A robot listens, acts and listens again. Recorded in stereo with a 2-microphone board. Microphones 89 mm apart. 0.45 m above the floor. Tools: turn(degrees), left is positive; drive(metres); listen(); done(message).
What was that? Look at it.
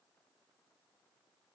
listen()
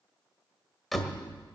turn(degrees=30)
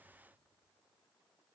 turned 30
listen()
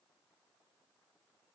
done("I heard a door slam, but can't make it out now. It was about 30° right or 150° left.")